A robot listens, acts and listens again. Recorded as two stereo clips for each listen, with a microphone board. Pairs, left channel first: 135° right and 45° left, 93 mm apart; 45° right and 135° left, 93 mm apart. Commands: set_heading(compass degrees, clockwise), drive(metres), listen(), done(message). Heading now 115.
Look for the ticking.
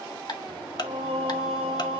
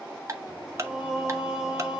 set_heading(285)
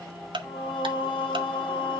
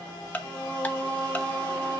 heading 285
set_heading(260)
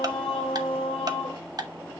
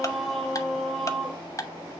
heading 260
done("Found it: ticking, straight ahead.")